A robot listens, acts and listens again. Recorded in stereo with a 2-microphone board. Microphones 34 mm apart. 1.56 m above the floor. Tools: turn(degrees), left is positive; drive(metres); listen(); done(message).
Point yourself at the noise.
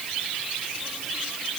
listen()
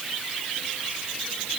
listen()
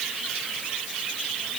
done("I can't make out anything to turn to.")